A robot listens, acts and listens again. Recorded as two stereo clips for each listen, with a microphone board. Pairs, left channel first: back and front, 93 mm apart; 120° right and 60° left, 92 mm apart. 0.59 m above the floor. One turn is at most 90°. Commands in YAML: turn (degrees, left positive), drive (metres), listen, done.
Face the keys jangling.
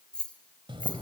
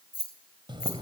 turn: -90
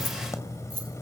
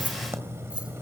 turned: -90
turn: -20
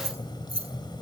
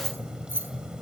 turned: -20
turn: -10
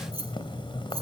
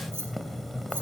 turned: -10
listen: true
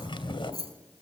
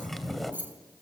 turn: -10
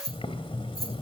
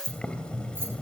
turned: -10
done: "Found it: keys jangling, straight ahead, over 4 m away."